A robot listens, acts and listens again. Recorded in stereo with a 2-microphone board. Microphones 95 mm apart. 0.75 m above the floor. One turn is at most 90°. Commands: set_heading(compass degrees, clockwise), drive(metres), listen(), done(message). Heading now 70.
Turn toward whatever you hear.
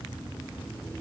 listen()
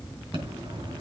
set_heading(135)
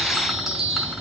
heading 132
done("Facing the chime.")